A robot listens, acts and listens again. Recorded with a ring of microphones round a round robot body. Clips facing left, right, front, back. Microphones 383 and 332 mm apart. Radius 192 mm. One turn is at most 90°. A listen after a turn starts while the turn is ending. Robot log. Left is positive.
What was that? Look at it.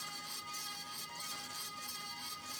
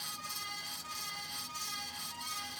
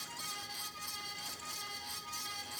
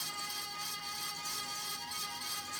cmd idle
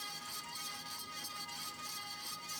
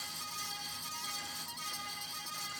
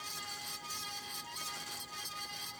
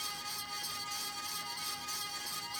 cmd idle
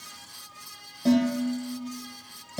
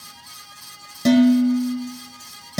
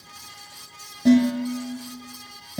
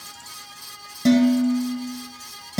note: The dishes clattering: 125° right.
cmd yaw -90
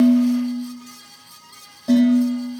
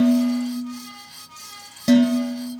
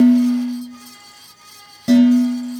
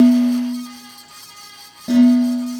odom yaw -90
note: The dishes clattering is now 55° right.
cmd yaw -55
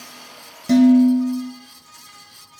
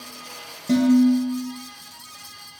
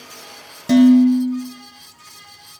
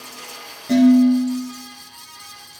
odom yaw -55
note: The dishes clattering is now 20° left.
cmd yaw +20
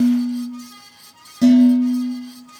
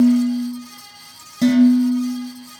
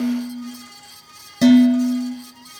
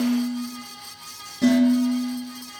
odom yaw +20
end: Found it: dishes clattering, straight ahead.